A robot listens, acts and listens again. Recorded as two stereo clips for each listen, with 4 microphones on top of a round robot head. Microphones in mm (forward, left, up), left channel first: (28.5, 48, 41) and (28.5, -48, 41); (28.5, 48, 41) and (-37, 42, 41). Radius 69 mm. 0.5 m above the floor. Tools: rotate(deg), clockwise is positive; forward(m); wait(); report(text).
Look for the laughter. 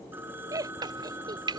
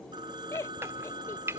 rotate(40)
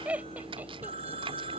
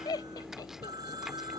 rotate(15)
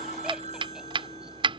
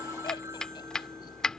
wait()
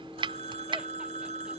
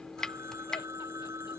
wait()
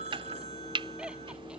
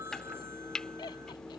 rotate(10)
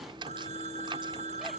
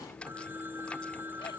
wait()
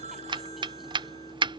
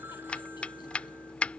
wait()
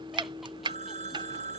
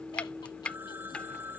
report("I heard laughter from this way, but can't make it out now.")